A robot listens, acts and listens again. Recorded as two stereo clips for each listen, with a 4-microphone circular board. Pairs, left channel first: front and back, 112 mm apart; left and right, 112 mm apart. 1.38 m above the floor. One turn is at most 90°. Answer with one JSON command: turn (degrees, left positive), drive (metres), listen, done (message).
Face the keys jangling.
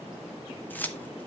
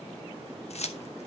{"turn": 75}
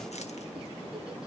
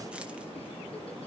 {"listen": true}
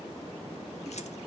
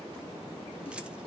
{"listen": true}
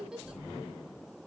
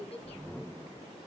{"done": "Facing where the keys jangling came from. I can't hear it now."}